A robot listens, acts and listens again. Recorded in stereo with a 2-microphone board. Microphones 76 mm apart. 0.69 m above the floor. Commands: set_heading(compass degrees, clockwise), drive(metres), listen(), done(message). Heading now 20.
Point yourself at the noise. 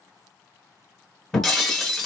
set_heading(350)
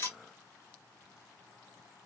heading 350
set_heading(205)
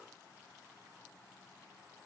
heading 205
done("I heard breaking glass from this way, but can't make it out now.")